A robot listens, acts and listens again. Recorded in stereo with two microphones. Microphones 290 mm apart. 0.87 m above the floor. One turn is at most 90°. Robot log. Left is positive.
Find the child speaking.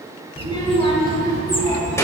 cmd yaw +30
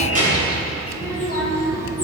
note: So it is at 30° right.
cmd yaw -30
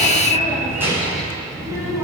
note: The child speaking is now 10° right.
cmd yaw -10
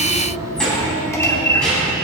end: Facing the child speaking.